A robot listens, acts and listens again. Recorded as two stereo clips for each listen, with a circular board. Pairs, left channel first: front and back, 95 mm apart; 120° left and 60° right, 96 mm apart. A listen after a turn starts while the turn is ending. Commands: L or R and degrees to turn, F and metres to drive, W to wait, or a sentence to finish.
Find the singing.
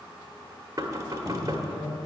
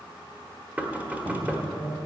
Facing the singing, 2 to 4 m away.